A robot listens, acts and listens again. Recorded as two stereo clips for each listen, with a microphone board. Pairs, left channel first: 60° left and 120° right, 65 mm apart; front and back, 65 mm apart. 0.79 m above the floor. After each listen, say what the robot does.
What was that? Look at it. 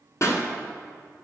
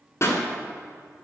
Turn 30° left.
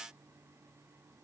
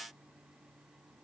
Facing where the pop came from. I can't hear it now.